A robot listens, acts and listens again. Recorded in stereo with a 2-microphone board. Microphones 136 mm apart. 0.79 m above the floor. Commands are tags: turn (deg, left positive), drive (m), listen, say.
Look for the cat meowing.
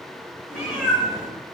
<turn deg="-30"/>
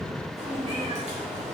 <turn deg="-125"/>
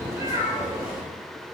<turn deg="-15"/>
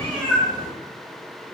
<turn deg="10"/>
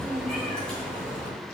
<say>Found it: a cat meowing, straight ahead, 2 to 4 m away.</say>